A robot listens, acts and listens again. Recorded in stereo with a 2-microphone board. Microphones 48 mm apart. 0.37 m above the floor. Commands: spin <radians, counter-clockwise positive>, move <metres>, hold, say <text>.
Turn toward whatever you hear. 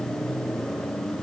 hold
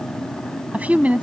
spin -0.61
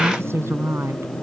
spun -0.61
spin -2.01
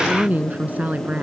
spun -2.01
spin -0.61
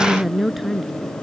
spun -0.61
say Facing the woman speaking.